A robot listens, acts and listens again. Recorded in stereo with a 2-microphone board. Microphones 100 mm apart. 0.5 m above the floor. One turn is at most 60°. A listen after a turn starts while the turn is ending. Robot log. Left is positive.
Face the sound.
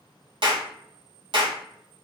note: The clap: about 55° right or 125° right.
cmd yaw -55
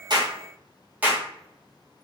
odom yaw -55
note: So it is at 20° right.
cmd yaw -20
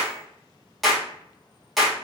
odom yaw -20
end: Facing the clap.